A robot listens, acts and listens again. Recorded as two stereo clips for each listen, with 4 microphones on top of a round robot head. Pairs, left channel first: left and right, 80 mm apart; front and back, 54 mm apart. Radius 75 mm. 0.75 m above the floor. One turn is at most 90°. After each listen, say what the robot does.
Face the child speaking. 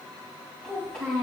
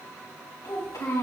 Facing the child speaking, 2 to 4 m away.